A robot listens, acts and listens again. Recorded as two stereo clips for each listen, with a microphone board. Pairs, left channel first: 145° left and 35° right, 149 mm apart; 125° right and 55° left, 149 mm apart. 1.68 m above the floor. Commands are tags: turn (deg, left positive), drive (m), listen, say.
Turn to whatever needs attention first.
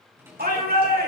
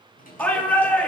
<turn deg="-45"/>
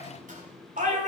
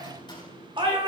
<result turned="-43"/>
<say>Found it: a shout, straight ahead.</say>